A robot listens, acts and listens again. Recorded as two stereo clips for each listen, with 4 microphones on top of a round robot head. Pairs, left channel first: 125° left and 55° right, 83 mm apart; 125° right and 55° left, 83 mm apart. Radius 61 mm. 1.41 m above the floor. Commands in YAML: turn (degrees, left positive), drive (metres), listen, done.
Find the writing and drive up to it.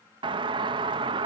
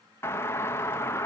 listen: true
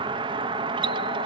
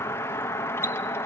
listen: true
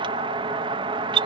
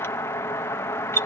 done: "I can't make out writing, only a doorbell."